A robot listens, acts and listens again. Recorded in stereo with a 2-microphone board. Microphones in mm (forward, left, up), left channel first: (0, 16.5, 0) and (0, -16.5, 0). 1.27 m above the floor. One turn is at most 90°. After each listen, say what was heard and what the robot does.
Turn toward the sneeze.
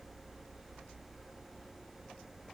Keep listening.
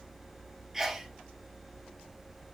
Turn 30° right.
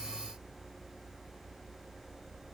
Keep listening.
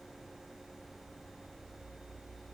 I heard a sneeze, but can't make it out now. It was about 20° left or 140° right.